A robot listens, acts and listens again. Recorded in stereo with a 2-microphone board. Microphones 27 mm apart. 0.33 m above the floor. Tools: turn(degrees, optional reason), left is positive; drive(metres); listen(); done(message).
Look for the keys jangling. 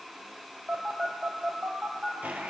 listen()
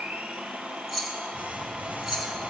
turn(degrees=-25, reason="The keys jangling: about 25° right or 155° right.")
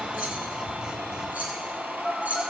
turn(degrees=-120, reason="So it is at 120° right.")
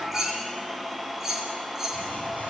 turn(degrees=-15, reason="The keys jangling is now 15° right.")
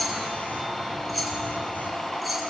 done("Facing the keys jangling, 2 to 4 m away.")